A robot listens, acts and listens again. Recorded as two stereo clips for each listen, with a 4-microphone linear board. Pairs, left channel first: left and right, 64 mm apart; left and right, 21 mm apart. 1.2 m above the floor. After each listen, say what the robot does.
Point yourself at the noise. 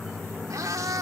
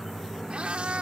Turn 70° right.
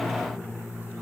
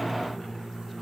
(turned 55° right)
Keep listening.
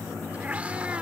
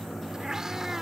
Turn 20° right.
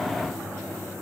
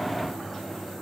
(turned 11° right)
Keep listening.
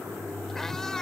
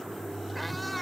Turn 10° left.
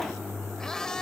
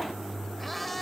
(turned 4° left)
Turn 10° left.
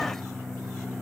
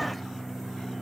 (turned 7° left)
Keep listening.
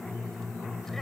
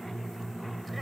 Keep listening.
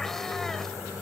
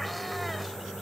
Facing where the cat meowing came from. I can't hear it now.